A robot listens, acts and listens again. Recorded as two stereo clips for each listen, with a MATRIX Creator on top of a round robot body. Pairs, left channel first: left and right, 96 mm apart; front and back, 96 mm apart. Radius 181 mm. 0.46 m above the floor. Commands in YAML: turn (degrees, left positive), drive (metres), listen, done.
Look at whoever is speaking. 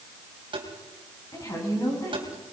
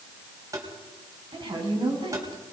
turn: 145
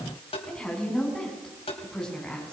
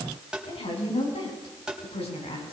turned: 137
turn: 10
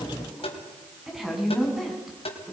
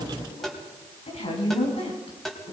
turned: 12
done: "Found it: a woman speaking, straight ahead."